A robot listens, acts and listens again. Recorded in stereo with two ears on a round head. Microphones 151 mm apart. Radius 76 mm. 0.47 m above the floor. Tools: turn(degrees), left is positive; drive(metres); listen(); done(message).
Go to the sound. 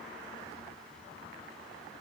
listen()
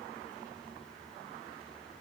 listen()
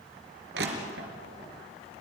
turn(degrees=-70)
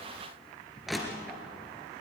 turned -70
drive(metres=1.0)
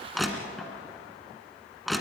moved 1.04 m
drive(metres=1.0)
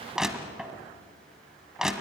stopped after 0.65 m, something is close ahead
done("I am next to the crushing.")